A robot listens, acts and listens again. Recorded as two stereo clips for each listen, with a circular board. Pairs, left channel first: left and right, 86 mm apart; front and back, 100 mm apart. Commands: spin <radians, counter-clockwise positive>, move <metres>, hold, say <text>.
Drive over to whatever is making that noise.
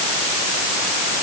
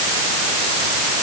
hold
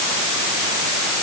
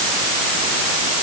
hold
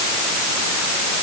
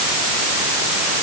say I can't make out anything to turn to.